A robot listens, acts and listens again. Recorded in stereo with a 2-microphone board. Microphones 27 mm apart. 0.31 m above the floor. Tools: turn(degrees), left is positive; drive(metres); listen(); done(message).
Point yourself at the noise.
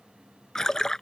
turn(degrees=25)
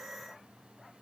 listen()
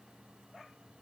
done("I heard a splash, but can't make it out now. It was about straight ahead or 130° left.")